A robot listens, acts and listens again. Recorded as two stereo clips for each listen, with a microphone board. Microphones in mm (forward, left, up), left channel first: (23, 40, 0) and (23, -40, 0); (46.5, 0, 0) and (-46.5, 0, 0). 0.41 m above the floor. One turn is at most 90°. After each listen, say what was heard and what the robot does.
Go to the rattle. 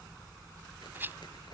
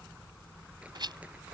The rattle: 150° right. Turn 90° right.
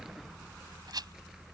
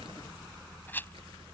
The rattle is now 65° right. Turn 65° right.
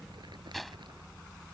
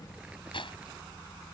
Drive 1.0 m forward.
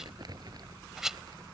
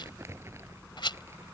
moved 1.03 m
Drive 1.0 m forward.
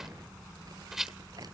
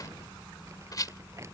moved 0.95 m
Drive 1.0 m forward.
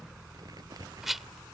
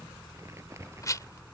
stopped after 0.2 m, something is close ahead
I am next to the rattle.